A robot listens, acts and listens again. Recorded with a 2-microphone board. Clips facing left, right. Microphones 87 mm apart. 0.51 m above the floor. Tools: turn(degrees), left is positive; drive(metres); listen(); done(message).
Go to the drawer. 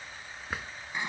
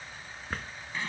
turn(degrees=30)
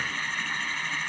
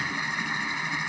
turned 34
listen()
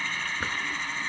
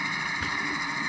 listen()
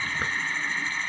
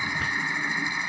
done("I heard a drawer, but can't make it out now. It was about 25° right or 140° left. I did not reach it.")